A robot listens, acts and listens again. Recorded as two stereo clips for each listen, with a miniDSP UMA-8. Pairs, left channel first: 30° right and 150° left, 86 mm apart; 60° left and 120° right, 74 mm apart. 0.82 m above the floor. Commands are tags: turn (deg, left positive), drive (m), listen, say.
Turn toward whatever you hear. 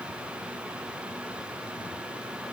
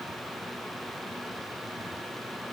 <listen/>
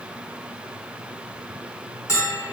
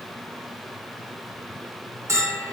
<turn deg="-75"/>
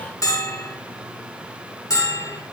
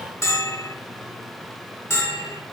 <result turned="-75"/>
<turn deg="15"/>
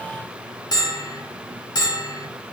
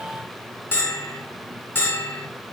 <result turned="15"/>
<say>Found it: a bell, straight ahead.</say>